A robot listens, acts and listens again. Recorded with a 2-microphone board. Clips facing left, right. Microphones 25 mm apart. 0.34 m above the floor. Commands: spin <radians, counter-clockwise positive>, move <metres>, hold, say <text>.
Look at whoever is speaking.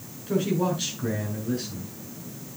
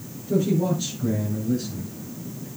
spin 1.31
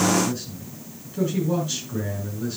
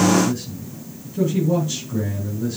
spin 0.17
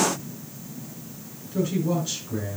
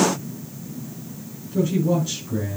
say Facing the man speaking, over 4 m away.